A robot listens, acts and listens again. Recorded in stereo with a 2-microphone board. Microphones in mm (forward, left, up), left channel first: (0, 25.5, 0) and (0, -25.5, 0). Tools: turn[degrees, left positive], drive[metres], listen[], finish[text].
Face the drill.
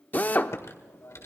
Thought: The drill: about 35° left or 145° left.
Action: turn[35]
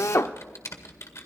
Thought: So it is at 105° left.
Action: turn[105]
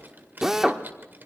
Thought: The drill is now 10° right.
Action: turn[-10]
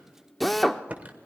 Action: finish[Facing the drill, under 1 m away.]